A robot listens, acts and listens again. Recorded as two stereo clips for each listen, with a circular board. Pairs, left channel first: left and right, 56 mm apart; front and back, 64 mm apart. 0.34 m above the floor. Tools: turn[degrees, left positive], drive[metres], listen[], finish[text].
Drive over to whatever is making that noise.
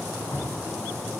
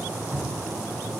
Thought: The dripping: 85° left.
Action: turn[85]
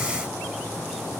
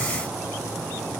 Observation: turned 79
Action: listen[]
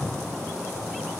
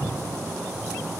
Action: drive[1.0]
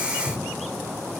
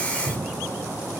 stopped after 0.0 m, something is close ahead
Action: finish[Blocked. The dripping is further on, straight ahead.]